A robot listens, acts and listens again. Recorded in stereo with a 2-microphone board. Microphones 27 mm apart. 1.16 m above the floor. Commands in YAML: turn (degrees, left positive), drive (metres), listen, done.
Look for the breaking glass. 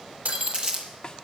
turn: -75
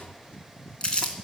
listen: true
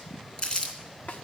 done: "I heard breaking glass, but can't make it out now. It was about straight ahead or 30° right."